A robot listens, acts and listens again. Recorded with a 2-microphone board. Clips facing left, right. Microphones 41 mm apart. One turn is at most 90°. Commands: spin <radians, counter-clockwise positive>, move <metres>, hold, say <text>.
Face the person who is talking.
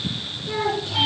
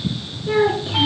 spin -0.44
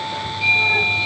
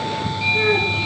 hold
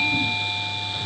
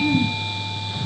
hold
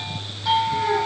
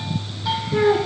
spin -1.57
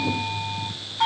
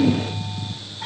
spin -0.61
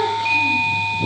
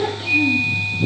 hold
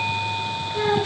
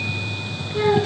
say Facing the child speaking, over 4 m away.